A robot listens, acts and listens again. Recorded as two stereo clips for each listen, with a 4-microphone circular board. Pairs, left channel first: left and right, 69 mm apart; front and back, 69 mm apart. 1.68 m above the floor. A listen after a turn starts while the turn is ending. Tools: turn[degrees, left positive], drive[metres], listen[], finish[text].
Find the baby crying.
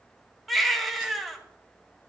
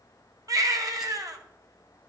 Thought: The baby crying: straight behind.
Action: turn[180]
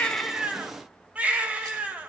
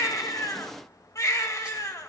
Thought: The baby crying is now 25° right.
Action: turn[-25]
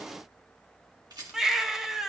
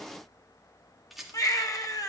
Action: finish[Found it: a baby crying, straight ahead, under 1 m away.]